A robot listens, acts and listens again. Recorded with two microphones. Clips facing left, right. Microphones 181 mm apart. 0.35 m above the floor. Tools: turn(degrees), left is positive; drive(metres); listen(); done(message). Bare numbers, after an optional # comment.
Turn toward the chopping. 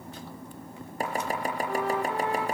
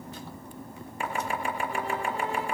# The chopping: about 40° left or 140° left.
turn(40)
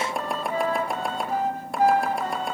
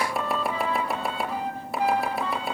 done("Found it: chopping, straight ahead.")